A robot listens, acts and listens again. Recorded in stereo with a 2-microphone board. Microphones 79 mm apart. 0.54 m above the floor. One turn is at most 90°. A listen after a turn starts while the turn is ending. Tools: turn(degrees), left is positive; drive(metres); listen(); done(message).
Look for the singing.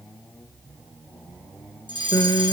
turn(degrees=50)
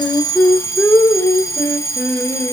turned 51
turn(degrees=20)
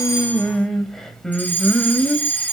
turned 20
turn(degrees=10)
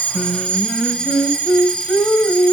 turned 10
done("Found it: singing, straight ahead, 2 to 4 m away.")